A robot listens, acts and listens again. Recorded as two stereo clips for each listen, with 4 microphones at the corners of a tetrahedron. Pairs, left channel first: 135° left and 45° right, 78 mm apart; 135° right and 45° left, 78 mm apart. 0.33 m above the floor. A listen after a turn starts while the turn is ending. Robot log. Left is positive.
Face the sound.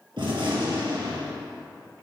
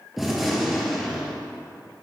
note: The gunshot: 40° right.
cmd yaw -40
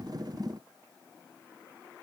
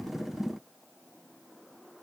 end: Facing where the gunshot came from. I can't hear it now.